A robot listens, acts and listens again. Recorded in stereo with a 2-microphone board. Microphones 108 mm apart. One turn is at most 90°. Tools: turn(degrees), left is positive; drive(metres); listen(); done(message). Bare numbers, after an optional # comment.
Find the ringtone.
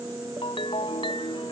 # The ringtone: about 55° left or 125° left.
turn(55)
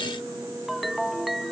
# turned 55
done("Facing the ringtone.")